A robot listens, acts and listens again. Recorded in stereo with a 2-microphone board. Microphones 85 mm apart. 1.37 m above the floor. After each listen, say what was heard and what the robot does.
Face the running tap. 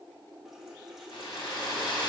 Turn 30° right.
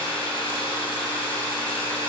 Keep listening.
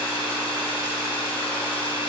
Keep listening.
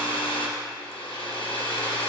I heard a running tap, but can't make it out now. It was about 25° left or 145° right.